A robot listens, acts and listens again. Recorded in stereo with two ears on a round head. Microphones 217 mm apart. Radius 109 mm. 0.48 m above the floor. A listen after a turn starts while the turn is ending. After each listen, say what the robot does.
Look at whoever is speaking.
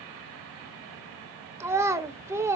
Turn 30° right.
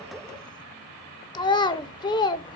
Turn 20° left.
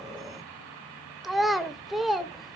Facing the child speaking.